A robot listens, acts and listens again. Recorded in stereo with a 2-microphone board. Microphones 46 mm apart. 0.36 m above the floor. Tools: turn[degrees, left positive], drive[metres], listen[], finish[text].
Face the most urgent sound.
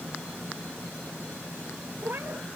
Action: listen[]
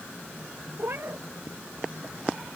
Action: listen[]
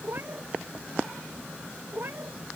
Action: finish[I can't make out anything urgent, only a cat meowing.]